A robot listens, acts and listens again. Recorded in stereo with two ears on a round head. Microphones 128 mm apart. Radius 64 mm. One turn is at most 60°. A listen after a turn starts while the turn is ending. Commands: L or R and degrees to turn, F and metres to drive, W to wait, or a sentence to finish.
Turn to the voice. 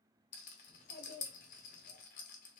L60
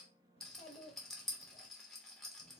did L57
L40
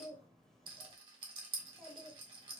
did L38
Found it: a child speaking, straight ahead, 1 to 2 m away.